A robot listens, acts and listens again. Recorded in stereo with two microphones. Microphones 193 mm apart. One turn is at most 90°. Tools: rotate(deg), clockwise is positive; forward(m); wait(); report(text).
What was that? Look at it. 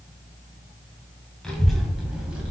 rotate(30)
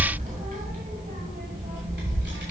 rotate(90)
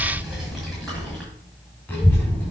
rotate(-10)
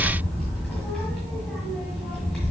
report("Found it: a child speaking, straight ahead.")